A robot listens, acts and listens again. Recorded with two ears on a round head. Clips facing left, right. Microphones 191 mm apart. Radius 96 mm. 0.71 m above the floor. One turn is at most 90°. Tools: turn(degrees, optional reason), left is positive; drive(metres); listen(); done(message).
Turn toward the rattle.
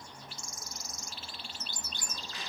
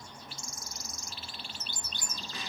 listen()
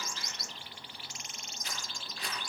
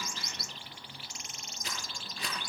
turn(degrees=-60, reason="The rattle: about 60° right or 120° right.")
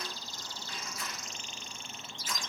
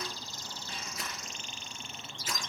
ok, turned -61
listen()
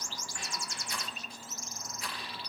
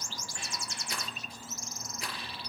turn(degrees=-55, reason="So it is at 55° right.")
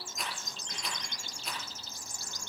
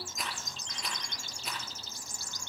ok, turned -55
done("Found it: a rattle, straight ahead.")